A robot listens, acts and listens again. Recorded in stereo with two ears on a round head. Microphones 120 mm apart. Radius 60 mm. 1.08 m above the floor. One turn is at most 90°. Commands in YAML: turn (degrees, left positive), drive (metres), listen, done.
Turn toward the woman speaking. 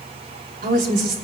turn: -65
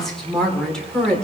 done: "Facing the woman speaking."